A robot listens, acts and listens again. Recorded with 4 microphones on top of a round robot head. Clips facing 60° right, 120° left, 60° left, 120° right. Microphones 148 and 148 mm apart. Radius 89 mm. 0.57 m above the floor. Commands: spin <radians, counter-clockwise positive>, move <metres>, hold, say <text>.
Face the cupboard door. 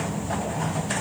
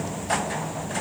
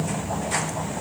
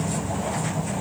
hold
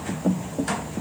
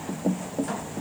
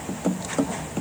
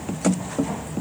hold
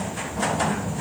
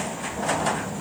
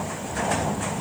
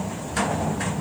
say I can't make out a cupboard door.